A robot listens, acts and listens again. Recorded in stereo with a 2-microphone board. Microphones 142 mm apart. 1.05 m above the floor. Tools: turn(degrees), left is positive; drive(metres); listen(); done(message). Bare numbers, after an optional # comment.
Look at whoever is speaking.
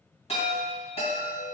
listen()
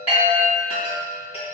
listen()
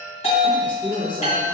# The woman speaking: about 35° left or 145° left.
turn(35)
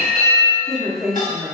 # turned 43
done("Facing the woman speaking, under 1 m away.")